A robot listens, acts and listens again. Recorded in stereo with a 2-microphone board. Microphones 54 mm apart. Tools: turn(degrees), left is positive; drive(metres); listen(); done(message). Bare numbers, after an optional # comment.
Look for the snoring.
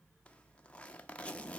listen()
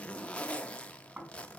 # The snoring: about 30° right or 150° right.
turn(-30)
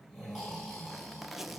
done("Found it: snoring, straight ahead.")